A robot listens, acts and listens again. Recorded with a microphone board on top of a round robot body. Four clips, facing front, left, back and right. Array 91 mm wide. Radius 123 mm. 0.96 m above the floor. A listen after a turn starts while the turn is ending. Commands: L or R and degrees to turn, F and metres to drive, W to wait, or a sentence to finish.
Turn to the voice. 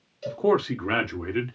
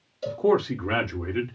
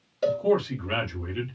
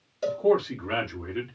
L10
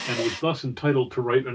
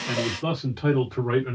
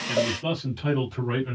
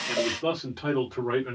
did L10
Facing the man speaking.